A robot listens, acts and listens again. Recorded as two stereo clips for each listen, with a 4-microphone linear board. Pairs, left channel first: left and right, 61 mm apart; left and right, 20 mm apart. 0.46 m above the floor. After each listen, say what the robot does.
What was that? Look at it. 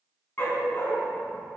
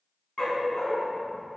Turn 35° left.
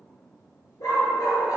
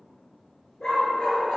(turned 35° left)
Turn 100° left.
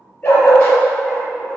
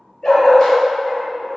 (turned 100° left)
Turn 20° left.
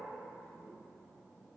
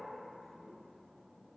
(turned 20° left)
Keep listening.
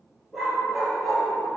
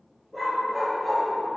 Found it: a dog barking, straight ahead.